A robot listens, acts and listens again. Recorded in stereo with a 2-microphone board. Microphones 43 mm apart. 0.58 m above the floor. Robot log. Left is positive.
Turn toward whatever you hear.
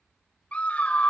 note: The scream: about 30° left or 150° left.
cmd yaw +30
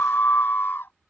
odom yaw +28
note: So it is at 120° left.
cmd yaw +120
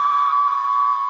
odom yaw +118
end: Facing the scream.